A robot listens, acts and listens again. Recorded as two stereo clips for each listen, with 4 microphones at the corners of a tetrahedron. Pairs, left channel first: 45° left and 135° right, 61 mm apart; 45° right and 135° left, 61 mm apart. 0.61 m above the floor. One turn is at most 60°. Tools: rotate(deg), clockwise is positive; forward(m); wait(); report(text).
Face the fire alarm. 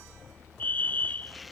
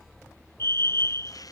rotate(10)
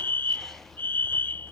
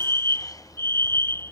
report("Found it: a fire alarm, straight ahead.")